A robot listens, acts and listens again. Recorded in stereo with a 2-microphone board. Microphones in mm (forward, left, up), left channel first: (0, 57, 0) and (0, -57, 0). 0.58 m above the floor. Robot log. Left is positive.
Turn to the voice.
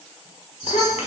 note: The child speaking: about 70° left or 110° left.
cmd yaw +70
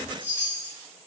cmd idle
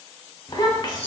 note: So it is at 40° left.
cmd yaw +40
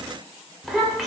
end: Found it: a child speaking, straight ahead, under 1 m away.